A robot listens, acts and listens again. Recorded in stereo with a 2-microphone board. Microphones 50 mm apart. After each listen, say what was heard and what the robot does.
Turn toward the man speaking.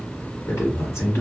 The man speaking: about 70° left or 110° left. Turn 70° left.
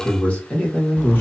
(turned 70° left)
So it is at 40° left. Turn 40° left.
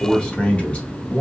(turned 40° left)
The man speaking is now 30° left. Turn 30° left.
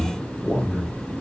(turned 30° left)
The man speaking is now 25° left. Turn 25° left.
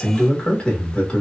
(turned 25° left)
The man speaking is now 15° left. Turn 15° left.
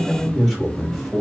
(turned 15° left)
Facing the man speaking, 1 to 2 m away.